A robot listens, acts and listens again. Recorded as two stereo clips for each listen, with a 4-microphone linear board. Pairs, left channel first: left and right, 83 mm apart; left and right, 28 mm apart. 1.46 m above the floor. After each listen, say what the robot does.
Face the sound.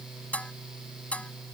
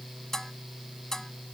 Turn 15° left.
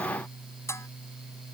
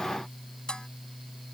Turn 145° left.
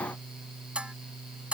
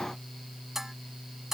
Turn 15° right.
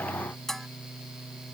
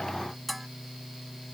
Facing the dishes clattering.